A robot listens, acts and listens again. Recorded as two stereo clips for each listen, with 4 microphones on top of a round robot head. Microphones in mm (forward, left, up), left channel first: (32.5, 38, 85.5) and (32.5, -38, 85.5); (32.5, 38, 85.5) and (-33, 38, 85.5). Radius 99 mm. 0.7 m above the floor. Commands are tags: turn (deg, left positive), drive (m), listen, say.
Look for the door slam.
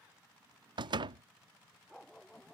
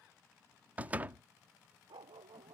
<turn deg="-110"/>
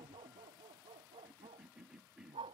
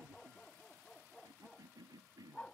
<say>Facing where the door slam came from. I can't hear it now.</say>